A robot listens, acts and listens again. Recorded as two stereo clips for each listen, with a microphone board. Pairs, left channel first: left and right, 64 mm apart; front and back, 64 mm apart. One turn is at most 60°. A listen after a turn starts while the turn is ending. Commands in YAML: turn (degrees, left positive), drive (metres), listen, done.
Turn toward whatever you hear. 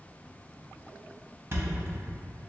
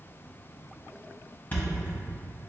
turn: -50
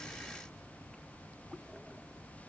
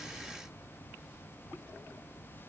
done: "I heard a thud from this way, but can't make it out now."